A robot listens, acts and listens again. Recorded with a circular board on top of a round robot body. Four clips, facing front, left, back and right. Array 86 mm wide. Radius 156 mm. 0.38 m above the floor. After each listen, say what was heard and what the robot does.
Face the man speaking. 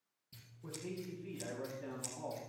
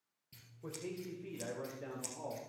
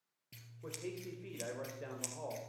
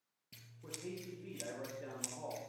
The man speaking: 170° left. Turn 170° left.
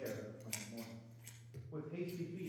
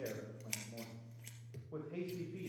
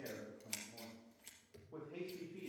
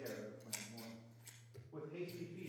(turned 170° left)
The man speaking is now 90° left. Turn 90° left.
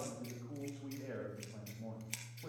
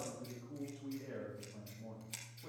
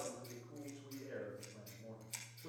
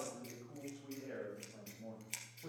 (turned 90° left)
The man speaking is now 20° right. Turn 20° right.
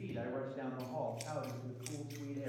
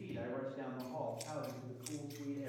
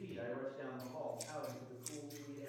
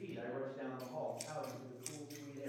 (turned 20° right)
Found it: a man speaking, straight ahead.